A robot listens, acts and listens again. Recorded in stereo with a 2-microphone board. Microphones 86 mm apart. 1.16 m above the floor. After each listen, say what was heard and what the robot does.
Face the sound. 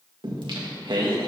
The singing: about 70° right or 110° right. Turn 70° right.
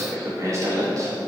So it is at 45° right. Turn 45° right.
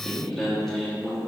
Found it: singing, straight ahead.